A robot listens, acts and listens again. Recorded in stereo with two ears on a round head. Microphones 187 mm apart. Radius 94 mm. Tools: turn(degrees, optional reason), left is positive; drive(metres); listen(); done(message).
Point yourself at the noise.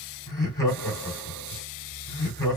turn(degrees=15, reason="The laughter: about 15° left or 165° left.")
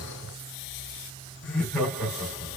done("Facing the laughter, 1 to 2 m away.")